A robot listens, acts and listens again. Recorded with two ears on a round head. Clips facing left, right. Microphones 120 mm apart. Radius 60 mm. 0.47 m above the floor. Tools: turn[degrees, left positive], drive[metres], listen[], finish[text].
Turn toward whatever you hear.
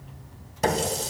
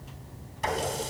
Thought: The running tap: about 60° left or 120° left.
Action: turn[60]
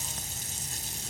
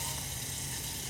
Thought: So it is at 60° left.
Action: turn[60]
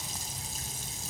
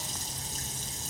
Thought: The running tap is now 10° left.
Action: turn[10]
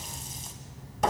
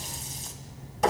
Action: finish[Found it: a running tap, straight ahead, 2 to 4 m away.]